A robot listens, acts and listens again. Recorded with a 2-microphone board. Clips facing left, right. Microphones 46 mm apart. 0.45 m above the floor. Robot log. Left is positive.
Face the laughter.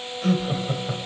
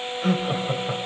cmd yaw -30
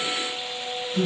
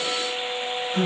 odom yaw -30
note: So it is at 140° right.
cmd yaw -140
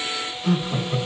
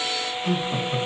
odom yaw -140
end: Found it: laughter, straight ahead.